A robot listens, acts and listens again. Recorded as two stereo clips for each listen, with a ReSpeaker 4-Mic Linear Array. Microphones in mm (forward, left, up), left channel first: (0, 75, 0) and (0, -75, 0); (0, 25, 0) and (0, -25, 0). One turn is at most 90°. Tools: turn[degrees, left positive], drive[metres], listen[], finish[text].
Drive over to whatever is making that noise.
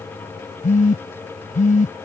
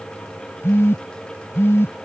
Thought: The phone buzzing: about 60° left or 120° left.
Action: turn[60]
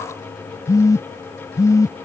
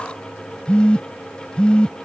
Thought: So it is at 25° left.
Action: turn[25]
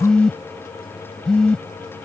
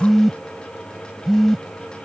Action: drive[1.0]
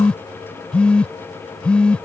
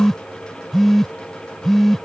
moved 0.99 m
Thought: The phone buzzing is now 10° left.
Action: turn[10]
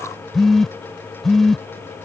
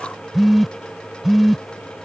Action: drive[1.0]
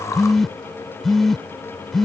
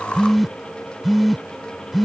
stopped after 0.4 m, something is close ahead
Action: finish[Arrived at the phone buzzing, straight ahead.]